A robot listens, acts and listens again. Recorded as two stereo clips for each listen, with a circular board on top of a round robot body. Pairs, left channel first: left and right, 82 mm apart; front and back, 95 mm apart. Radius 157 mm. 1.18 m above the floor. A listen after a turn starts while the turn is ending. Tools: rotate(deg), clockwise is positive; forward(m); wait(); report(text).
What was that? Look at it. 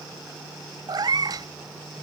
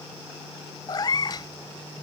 rotate(50)
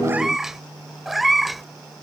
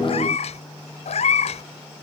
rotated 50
report("Found it: a cat meowing, straight ahead.")